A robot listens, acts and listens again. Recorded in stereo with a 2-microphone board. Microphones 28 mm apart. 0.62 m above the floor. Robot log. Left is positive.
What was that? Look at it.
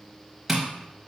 cmd yaw -30
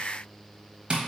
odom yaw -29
note: So it is at 140° right.
cmd yaw -140
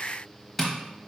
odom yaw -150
note: The tapping is now 10° left.
cmd yaw +10
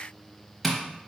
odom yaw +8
end: Facing the tapping.